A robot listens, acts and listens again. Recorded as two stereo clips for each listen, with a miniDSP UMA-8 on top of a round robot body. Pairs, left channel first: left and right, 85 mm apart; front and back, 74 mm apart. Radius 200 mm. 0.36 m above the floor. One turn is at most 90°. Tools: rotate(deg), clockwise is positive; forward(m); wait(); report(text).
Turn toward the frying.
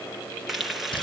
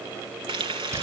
rotate(-90)
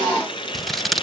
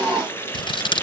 rotate(-60)
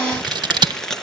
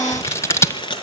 report("Facing the frying.")